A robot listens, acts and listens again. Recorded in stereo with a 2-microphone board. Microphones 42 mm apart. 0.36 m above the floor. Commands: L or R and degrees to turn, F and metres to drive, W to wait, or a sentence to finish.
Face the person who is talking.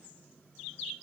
W
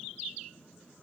W
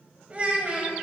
R35
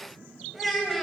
Facing the child speaking, under 1 m away.